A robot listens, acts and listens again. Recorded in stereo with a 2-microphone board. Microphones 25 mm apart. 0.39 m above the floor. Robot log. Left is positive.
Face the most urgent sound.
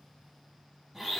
cmd idle
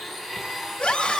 note: The scream: about 45° left or 135° left.
cmd yaw +45
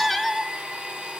end: Found it: a scream, straight ahead.